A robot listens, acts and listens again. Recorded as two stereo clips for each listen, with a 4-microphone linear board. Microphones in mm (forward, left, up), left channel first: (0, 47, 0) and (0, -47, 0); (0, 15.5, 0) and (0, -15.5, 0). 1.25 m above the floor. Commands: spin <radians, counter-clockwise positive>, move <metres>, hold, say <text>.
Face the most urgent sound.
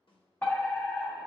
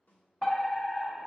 spin 0.26
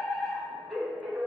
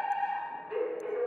say Found it: a fire alarm, straight ahead, 1 to 2 m away.